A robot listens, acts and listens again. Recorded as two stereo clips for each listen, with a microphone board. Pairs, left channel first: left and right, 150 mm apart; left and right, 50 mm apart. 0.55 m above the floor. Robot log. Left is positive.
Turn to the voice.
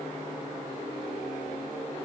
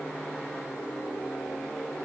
cmd idle
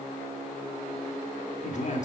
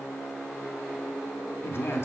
note: The man speaking: about 55° left or 125° left.
cmd yaw +55
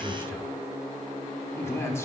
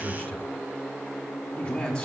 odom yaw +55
note: So it is at 20° left.
cmd yaw +20
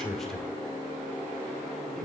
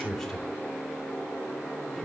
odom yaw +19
end: Facing the man speaking.